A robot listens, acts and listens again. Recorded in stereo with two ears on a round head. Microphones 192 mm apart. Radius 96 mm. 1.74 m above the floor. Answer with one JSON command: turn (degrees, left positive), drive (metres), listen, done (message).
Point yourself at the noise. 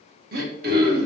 {"turn": -45}
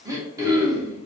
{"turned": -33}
{"turn": -15}
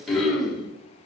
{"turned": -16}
{"done": "Found it: throat clearing, straight ahead, 1 to 2 m away."}